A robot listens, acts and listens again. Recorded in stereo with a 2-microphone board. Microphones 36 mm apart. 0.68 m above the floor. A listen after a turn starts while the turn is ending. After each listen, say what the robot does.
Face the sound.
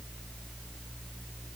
Keep listening.
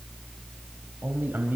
Turn 70° right.
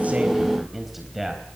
Facing the man speaking.